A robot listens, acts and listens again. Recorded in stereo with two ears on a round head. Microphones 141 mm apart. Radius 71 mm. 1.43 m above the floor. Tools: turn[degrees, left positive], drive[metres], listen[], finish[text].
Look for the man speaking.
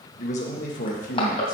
Thought: The man speaking: about 50° left or 130° left.
Action: turn[50]
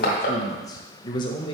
Thought: So it is at 30° left.
Action: turn[30]
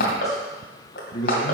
Thought: The man speaking is now 35° left.
Action: turn[35]
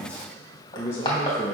Thought: The man speaking is now 15° left.
Action: turn[15]
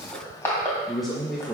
Action: finish[Facing the man speaking, 1 to 2 m away.]